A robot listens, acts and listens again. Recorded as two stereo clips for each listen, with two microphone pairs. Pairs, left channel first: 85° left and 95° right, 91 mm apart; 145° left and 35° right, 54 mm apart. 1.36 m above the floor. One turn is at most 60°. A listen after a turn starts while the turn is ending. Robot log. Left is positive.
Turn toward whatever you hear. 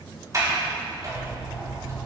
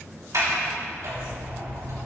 note: The sliding door: 45° right.
cmd yaw -45
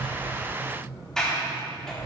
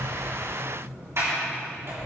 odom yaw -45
end: Facing the sliding door.